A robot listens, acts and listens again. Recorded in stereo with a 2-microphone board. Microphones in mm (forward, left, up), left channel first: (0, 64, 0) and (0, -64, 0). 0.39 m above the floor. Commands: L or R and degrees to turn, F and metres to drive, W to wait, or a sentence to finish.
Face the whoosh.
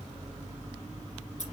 W
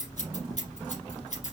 W
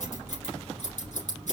I can't make out a whoosh, only scissors.